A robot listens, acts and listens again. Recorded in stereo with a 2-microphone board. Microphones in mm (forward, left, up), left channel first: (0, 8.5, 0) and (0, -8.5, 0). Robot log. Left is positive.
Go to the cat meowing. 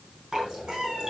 note: The cat meowing: about 75° right or 105° right.
cmd yaw -75
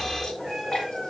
cmd idle
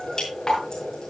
cmd idle
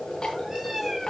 note: So it is at 25° right.
cmd yaw -25
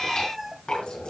cmd fwd 1.0
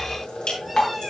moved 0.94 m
cmd idle
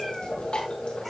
cmd idle
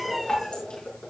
cmd fwd 1.0
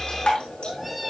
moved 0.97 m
cmd fwd 1.0
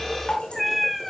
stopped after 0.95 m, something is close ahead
end: I am next to the cat meowing.